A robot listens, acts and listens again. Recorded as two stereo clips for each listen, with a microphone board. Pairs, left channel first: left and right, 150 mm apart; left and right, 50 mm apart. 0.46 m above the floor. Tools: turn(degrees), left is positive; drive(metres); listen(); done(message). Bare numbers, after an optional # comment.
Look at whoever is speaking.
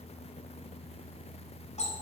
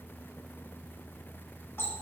listen()
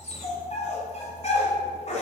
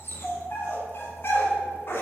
listen()
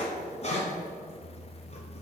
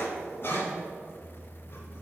done("I can't make out anyone speaking to turn to.")